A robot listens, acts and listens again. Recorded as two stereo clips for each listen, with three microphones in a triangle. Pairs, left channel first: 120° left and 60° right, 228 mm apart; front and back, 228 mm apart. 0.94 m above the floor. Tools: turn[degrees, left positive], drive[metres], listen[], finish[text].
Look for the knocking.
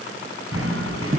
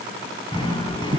Thought: The knocking: 70° right.
Action: turn[-70]
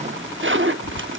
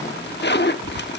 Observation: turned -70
Action: listen[]
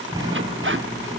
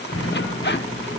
Thought: The knocking is now 10° left.
Action: turn[10]
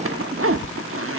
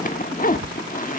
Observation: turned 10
Action: listen[]
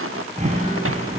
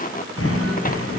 Action: finish[Facing the knocking, over 4 m away.]